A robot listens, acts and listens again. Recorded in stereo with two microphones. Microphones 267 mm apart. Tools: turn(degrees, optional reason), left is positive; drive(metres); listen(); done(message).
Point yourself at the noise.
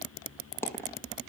turn(degrees=30)
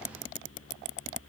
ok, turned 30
listen()
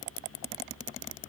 done("I heard a dropped coin, but can't make it out now. It was about 20° right or 140° left.")